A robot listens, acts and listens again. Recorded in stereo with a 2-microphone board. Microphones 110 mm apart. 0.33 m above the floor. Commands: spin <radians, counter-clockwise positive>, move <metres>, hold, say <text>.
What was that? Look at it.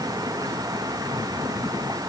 hold
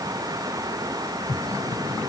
hold
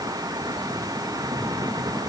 say I can't make out anything.